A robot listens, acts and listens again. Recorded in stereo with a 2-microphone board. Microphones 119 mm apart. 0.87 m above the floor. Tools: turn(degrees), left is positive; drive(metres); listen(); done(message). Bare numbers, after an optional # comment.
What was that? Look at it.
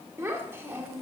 # The child speaking: about 20° right or 160° right.
turn(-20)
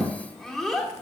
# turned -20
done("Facing the child speaking.")